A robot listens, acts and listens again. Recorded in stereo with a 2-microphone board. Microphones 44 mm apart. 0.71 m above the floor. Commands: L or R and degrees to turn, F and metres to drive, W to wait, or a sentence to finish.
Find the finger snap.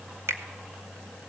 R90
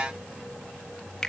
W
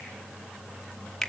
Facing the finger snap, 1 to 2 m away.